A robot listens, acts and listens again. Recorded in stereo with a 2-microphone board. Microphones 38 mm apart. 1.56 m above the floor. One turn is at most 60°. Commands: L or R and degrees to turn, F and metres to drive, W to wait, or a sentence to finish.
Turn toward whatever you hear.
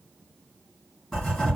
L20
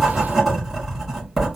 Found it: writing, straight ahead, 1 to 2 m away.